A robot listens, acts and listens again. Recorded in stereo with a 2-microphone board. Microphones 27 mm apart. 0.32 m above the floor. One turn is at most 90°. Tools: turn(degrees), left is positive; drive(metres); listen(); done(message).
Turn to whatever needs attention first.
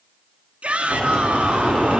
turn(degrees=-60)
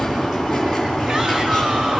listen()
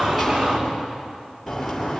listen()
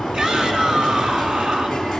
turn(degrees=-50)
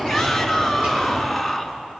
done("Found it: a shout, straight ahead.")